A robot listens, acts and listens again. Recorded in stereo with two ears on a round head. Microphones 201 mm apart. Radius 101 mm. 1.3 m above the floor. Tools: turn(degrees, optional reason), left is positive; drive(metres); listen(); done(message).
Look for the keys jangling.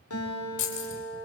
turn(degrees=65, reason="The keys jangling: about 65° left or 115° left.")
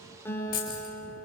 turn(degrees=45, reason="So it is at 45° left.")
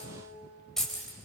done("Found it: keys jangling, straight ahead.")